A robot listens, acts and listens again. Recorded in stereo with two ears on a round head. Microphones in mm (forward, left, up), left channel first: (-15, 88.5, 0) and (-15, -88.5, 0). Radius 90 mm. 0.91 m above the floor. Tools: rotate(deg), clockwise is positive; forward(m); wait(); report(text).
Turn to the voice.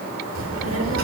rotate(90)
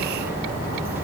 rotate(10)
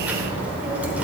rotate(10)
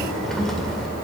report("Found it: a child speaking, straight ahead.")